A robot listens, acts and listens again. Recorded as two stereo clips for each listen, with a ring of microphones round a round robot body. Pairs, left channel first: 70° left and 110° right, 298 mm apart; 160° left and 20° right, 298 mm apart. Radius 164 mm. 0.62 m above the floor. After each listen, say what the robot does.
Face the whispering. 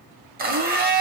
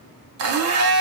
Keep listening.
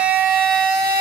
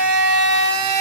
Keep listening.
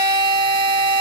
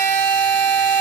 I can't make out whispering to turn to.